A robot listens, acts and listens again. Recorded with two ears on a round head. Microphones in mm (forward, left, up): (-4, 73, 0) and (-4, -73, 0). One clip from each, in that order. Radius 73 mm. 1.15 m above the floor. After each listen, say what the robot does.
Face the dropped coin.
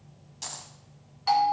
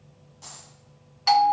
Turn 70° left.
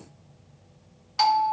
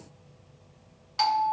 Keep listening.
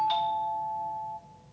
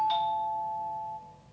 I heard a dropped coin, but can't make it out now. It was about straight ahead or 40° left.